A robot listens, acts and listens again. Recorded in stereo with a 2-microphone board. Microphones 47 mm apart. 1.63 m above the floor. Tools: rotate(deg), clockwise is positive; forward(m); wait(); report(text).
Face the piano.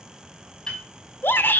rotate(-30)
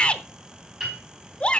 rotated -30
rotate(15)
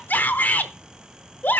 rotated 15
wait()
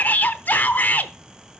wait()
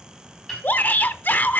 report("Found it: a piano, straight ahead, over 4 m away.")